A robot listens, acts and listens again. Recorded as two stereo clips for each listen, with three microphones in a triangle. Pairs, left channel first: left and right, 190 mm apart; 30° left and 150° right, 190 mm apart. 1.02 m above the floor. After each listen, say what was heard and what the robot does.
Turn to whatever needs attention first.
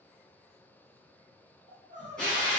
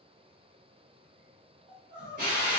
The crying: 135° right. Turn 135° right.
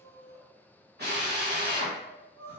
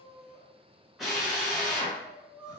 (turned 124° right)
The crying is now 10° right. Turn 10° right.
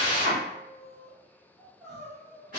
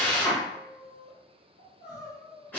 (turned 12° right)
Found it: crying, straight ahead.